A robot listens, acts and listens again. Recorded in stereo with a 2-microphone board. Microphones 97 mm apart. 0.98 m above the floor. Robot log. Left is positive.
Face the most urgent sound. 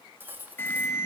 note: The alarm: about 25° left or 155° left.
cmd yaw +25
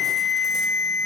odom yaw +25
end: Found it: an alarm, straight ahead.